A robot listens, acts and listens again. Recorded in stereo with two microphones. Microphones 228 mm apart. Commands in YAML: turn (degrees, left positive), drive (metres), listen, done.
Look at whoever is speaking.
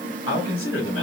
turn: 90
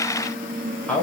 done: "Facing the man speaking, 2 to 4 m away."